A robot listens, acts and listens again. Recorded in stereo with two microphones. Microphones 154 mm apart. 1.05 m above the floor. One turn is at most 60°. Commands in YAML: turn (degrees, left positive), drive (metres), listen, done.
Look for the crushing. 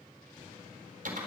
listen: true
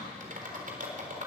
listen: true
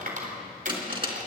turn: -35
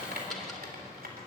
listen: true
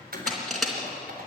done: "Facing the crushing, 2 to 4 m away."